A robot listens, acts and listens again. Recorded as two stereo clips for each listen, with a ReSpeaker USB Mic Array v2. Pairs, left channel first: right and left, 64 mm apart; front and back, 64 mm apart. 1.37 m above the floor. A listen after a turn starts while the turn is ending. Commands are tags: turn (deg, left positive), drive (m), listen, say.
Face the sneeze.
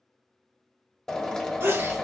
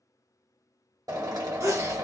<turn deg="145"/>
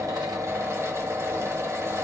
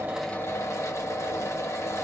<say>Facing where the sneeze came from. I can't hear it now.</say>